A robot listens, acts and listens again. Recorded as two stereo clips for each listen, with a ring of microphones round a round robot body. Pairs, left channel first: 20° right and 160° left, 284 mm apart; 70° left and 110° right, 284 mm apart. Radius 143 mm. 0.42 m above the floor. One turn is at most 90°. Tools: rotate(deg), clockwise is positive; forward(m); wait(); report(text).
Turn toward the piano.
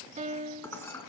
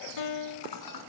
rotate(-90)
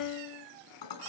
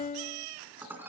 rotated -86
report("Found it: a piano, straight ahead.")